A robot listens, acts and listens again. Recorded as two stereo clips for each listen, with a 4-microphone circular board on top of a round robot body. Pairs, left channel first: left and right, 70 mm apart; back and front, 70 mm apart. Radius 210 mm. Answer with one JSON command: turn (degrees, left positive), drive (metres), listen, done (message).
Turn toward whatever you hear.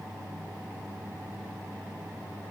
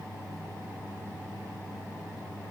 {"listen": true}
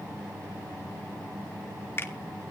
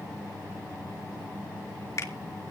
{"turn": 145}
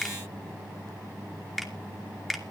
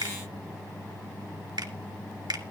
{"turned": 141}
{"done": "Found it: a finger snap, straight ahead, 2 to 4 m away."}